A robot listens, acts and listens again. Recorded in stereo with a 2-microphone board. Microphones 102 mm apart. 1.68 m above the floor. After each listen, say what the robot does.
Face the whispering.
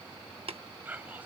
Turn 20° right.
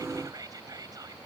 Turn 145° right.
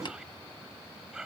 Facing the whispering.